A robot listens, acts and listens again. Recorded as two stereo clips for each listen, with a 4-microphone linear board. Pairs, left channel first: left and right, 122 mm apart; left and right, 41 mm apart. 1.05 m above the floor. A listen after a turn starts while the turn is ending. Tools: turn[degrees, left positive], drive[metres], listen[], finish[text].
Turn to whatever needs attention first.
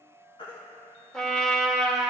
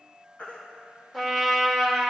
Thought: The baby crying: about 45° left or 135° left.
Action: turn[45]
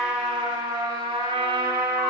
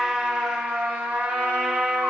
Action: listen[]
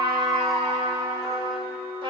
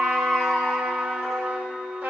Action: finish[Facing the baby crying.]